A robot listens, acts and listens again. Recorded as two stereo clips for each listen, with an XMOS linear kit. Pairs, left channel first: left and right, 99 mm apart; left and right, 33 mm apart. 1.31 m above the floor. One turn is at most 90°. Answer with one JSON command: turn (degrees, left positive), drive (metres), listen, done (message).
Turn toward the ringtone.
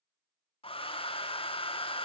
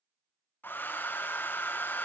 {"listen": true}
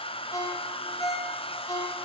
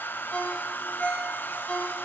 {"turn": 35}
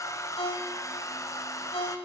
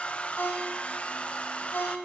{"turn": 90}
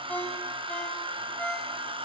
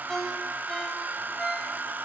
{"turn": 15}
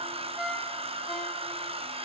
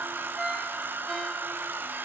{"done": "Found it: a ringtone, straight ahead, 2 to 4 m away."}